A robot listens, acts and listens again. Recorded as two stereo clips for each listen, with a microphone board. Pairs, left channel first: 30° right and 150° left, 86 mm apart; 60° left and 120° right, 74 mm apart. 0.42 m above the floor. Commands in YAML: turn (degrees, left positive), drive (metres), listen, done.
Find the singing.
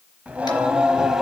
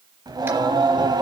turn: -125
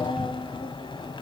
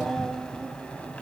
turn: -10
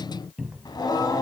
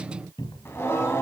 turn: 10
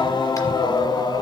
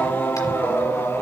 turn: 10
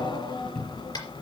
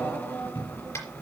done: "Found it: singing, straight ahead, 2 to 4 m away."